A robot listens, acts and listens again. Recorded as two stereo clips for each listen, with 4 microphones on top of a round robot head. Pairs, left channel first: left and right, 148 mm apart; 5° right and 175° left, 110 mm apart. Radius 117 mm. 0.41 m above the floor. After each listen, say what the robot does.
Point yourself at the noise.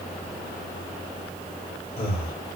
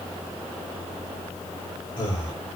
Turn 40° left.
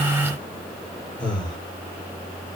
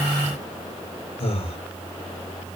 Facing the breathing.